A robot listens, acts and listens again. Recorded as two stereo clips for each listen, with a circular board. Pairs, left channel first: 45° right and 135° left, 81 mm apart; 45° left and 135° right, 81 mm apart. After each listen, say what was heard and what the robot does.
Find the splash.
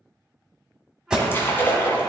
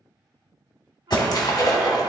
The splash: 15° left. Turn 15° left.
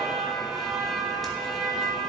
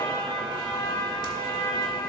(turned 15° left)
I heard a splash from this way, but can't make it out now.